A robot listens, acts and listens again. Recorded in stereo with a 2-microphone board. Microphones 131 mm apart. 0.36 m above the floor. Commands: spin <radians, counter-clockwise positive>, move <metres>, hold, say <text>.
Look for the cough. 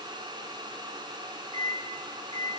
hold
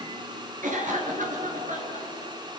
spin -1.57
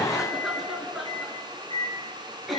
say Facing the cough, over 4 m away.